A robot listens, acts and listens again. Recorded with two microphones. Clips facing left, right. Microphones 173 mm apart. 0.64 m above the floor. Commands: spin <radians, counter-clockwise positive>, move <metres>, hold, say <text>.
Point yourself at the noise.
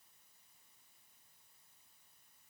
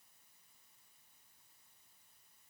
hold
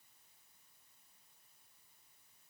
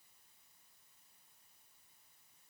hold
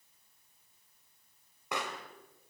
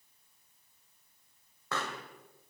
spin 0.26
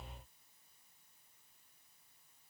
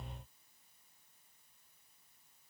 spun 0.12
hold
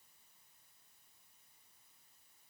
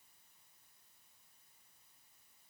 say I heard a pop, but can't make it out now. It was about 10° left or 160° left.